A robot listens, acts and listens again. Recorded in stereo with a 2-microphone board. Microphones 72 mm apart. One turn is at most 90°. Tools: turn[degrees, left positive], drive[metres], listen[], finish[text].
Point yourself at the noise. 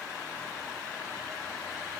Action: listen[]
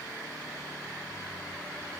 Action: listen[]
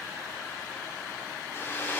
Thought: The hair dryer: about 35° left or 145° left.
Action: turn[35]
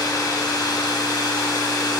Thought: So it is at 110° left.
Action: turn[90]
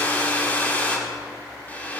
Thought: The hair dryer is now 25° left.
Action: turn[25]
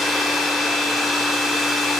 Action: finish[Found it: a hair dryer, straight ahead.]